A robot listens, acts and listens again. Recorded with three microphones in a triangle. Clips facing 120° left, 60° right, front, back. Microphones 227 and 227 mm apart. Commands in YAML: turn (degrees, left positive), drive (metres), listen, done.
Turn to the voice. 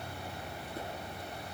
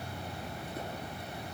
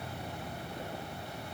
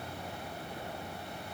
listen: true
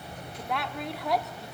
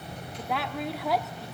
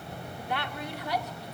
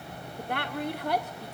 turn: -150
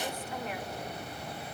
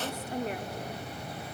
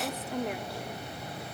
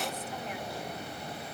turn: -15
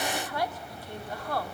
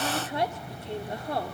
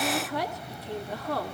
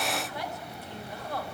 done: "Found it: a woman speaking, straight ahead, 1 to 2 m away."